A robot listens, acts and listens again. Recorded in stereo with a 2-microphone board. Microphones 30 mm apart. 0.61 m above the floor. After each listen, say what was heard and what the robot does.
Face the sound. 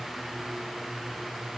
Keep listening.
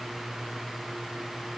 Keep listening.
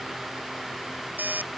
Turn 90° right.
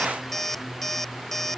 Found it: an alarm clock, straight ahead.